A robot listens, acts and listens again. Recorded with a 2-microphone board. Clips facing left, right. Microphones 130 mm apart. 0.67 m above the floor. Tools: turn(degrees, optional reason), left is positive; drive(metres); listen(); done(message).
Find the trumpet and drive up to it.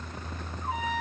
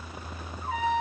turn(degrees=25, reason="The trumpet: about 25° left or 155° left.")
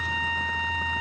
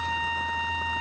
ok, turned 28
drive(metres=1.0)
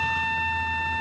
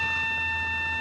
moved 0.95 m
drive(metres=1.0)
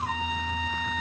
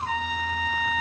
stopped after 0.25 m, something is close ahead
done("Arrived at the trumpet, straight ahead.")